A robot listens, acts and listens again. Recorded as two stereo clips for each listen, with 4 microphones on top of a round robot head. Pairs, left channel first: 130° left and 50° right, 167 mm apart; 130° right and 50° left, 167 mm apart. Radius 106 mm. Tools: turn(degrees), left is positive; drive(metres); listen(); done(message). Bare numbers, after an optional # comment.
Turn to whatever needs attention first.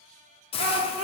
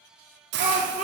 done("Found it: a shout, straight ahead.")